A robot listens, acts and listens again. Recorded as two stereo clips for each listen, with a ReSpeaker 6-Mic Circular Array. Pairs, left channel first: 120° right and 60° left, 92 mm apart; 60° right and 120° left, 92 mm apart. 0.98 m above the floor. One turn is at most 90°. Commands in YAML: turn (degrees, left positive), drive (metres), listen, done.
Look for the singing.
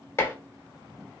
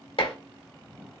listen: true
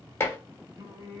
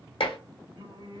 turn: 90
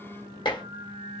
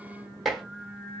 turn: 35
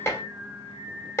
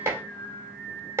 turn: 10
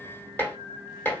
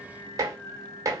done: "Facing the singing, 2 to 4 m away."